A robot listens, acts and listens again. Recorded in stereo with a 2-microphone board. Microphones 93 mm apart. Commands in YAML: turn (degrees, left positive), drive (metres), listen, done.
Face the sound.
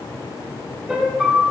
turn: -30
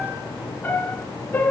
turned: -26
turn: 20
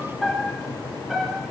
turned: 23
done: "Found it: a piano, straight ahead, 2 to 4 m away."